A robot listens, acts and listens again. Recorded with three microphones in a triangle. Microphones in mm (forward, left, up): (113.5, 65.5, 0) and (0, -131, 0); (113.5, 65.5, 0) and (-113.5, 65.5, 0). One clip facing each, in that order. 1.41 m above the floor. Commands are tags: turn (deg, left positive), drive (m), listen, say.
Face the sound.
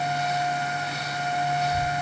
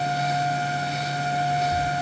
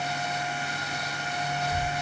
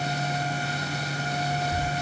<turn deg="-100"/>
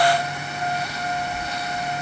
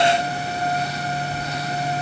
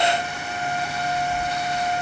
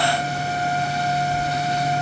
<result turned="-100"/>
<turn deg="-40"/>
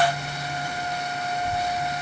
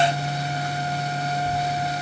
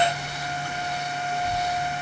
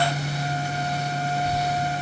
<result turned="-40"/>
<turn deg="-20"/>
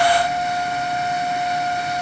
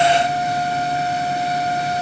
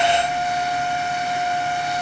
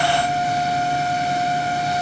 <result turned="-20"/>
<listen/>
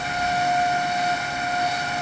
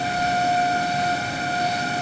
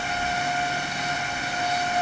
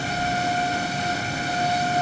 <say>Facing the child speaking.</say>